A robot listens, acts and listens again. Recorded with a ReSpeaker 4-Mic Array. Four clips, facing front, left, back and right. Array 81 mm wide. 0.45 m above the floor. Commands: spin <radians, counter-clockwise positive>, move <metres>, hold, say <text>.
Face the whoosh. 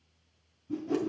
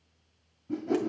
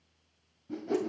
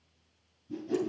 spin 2.18
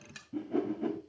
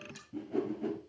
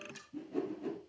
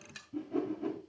say Facing the whoosh.